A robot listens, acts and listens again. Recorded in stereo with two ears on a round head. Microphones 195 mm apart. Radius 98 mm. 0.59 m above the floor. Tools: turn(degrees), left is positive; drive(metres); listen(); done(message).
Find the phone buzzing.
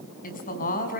listen()
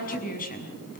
listen()
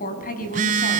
turn(degrees=-35)
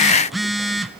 done("Facing the phone buzzing.")